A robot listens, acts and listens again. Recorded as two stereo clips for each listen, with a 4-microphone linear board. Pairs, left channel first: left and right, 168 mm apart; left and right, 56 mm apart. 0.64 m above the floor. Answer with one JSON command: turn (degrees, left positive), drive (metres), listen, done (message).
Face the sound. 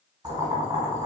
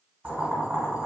{"turn": -25}
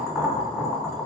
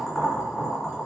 {"done": "Found it: boiling, straight ahead, 1 to 2 m away."}